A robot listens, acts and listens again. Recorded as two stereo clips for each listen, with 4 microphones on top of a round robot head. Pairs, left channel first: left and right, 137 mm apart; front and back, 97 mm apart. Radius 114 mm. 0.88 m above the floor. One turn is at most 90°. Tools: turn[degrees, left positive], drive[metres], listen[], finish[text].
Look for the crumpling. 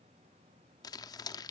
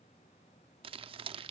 Thought: The crumpling: 155° left.
Action: turn[90]
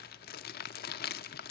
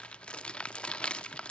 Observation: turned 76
Thought: The crumpling is now 80° left.
Action: turn[80]
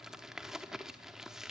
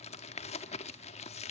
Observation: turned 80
Action: finish[Facing the crumpling, under 1 m away.]